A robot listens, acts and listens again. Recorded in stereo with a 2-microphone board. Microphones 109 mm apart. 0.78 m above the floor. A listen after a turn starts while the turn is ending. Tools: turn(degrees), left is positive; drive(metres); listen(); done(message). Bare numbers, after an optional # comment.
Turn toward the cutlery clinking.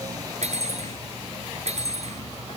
# The cutlery clinking: about 75° right or 105° right.
turn(-75)
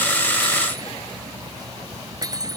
# So it is at 30° right.
turn(-30)
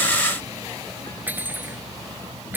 # The cutlery clinking is now 15° right.
turn(-15)
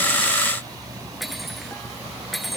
done("Facing the cutlery clinking.")